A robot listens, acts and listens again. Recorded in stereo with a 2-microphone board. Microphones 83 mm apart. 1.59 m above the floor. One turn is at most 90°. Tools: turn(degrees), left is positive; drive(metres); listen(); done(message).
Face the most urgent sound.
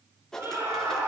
turn(degrees=-40)
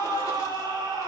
turn(degrees=-90)
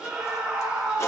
turn(degrees=-10)
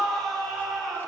done("Facing the scream.")